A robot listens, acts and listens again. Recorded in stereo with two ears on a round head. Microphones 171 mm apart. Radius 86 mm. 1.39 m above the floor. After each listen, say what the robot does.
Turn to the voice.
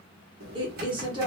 Turn 25° right.
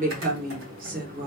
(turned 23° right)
Turn 130° right.
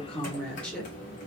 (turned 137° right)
Found it: a woman speaking, straight ahead.